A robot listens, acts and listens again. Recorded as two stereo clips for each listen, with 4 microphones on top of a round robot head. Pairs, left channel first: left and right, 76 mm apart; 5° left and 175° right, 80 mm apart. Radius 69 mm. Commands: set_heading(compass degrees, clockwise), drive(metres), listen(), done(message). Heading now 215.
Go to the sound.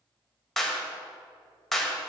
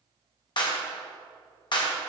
drive(1.0)
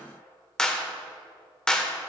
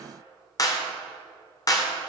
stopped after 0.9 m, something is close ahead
set_heading(205)
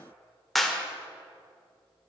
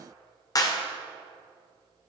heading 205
done("I am next to the clap.")